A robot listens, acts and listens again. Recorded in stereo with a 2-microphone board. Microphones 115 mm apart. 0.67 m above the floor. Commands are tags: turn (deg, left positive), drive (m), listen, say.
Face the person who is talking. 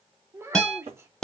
<turn deg="-20"/>
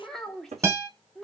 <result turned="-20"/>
<say>Found it: a child speaking, straight ahead.</say>